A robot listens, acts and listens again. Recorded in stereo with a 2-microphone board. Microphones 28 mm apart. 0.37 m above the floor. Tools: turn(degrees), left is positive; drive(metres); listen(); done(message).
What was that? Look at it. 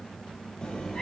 turn(degrees=25)
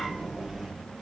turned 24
turn(degrees=-15)
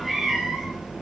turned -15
turn(degrees=-20)
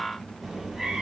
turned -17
turn(degrees=-15)
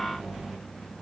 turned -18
turn(degrees=-10)
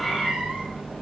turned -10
turn(degrees=-10)
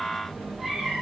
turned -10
done("Facing the cat meowing.")